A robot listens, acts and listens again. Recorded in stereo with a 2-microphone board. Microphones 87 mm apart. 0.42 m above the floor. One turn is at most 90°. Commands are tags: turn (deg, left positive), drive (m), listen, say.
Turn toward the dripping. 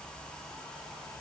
<listen/>
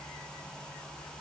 <listen/>
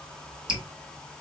<turn deg="-30"/>
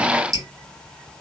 <turn deg="-90"/>
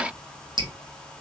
<turn deg="-65"/>
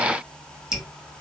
<say>Facing the dripping.</say>